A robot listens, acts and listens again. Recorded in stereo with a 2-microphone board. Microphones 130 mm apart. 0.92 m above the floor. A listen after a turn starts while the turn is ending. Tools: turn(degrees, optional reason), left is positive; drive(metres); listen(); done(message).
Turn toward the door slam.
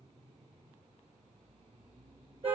listen()
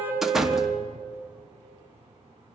turn(degrees=-30)
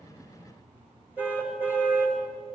listen()
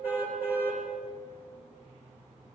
done("I heard a door slam, but can't make it out now. It was about 25° left or 145° right.")